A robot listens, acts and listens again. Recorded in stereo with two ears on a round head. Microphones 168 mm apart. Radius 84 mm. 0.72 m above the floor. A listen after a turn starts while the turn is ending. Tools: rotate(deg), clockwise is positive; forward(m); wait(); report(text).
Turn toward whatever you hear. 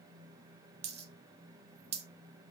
rotate(35)
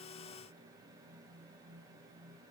wait()
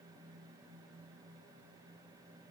report("I heard a dropped coin, but can't make it out now. It was about straight ahead or 110° right.")